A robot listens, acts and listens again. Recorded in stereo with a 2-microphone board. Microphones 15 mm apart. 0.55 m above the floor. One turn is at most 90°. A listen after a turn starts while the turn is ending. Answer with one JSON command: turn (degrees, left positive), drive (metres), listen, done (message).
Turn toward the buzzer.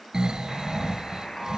{"turn": 40}
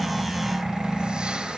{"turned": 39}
{"listen": true}
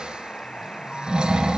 {"turn": 90}
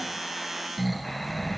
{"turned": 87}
{"turn": 15}
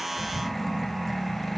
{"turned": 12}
{"listen": true}
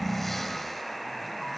{"done": "Facing the buzzer, 2 to 4 m away."}